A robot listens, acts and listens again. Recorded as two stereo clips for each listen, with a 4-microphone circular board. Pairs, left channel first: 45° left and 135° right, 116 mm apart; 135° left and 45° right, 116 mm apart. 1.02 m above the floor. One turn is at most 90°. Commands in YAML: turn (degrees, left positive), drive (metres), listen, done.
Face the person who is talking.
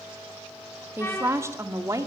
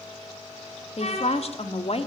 turn: 90
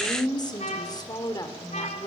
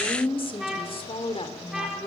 turn: 90
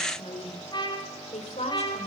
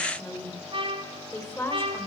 turn: 65
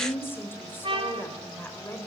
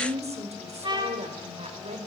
turn: -25
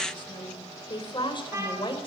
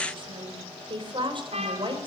done: "Facing the woman speaking."